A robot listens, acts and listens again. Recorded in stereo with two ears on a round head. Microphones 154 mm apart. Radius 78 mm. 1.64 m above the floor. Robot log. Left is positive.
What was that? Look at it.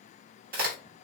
note: The crack: about 55° right or 125° right.
cmd yaw -55
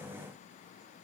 cmd idle
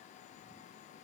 end: I heard a crack, but can't make it out now. It was about straight ahead or 70° right.